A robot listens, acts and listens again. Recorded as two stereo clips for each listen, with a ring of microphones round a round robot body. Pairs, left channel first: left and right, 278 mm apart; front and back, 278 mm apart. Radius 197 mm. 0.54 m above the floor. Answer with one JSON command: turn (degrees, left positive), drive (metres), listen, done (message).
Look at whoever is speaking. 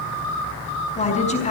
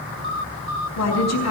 {"turn": 25}
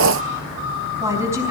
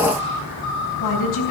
{"turn": -10}
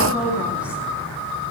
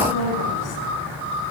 {"done": "Facing the woman speaking."}